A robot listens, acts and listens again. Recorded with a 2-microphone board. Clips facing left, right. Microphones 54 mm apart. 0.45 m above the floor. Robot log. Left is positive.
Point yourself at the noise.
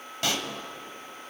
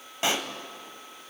note: The pop: about 20° right or 160° right.
cmd yaw -20
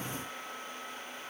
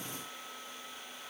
cmd idle
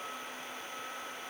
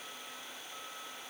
end: I heard a pop, but can't make it out now. It was about straight ahead or 140° right.